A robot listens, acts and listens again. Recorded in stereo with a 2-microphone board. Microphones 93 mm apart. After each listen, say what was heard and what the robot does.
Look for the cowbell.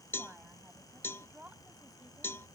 The cowbell: about 25° left or 155° left. Turn 25° left.
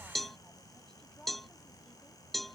Facing the cowbell.